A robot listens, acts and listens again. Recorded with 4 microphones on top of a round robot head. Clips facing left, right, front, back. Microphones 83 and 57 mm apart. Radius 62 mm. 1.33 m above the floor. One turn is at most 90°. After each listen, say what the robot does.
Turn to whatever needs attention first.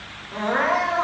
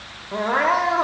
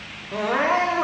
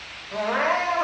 Turn 85° right.
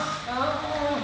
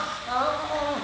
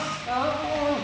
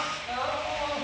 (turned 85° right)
Turn 25° right.
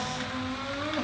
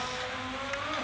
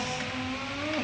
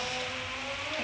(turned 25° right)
Facing the crying, 1 to 2 m away.